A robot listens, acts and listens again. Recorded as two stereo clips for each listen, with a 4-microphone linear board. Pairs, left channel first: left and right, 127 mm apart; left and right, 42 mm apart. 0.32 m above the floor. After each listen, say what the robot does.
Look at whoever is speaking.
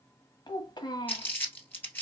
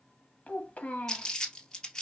Turn 35° left.
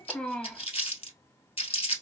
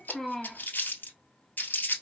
Turn 10° left.
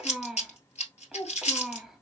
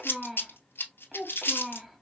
Facing the child speaking, 1 to 2 m away.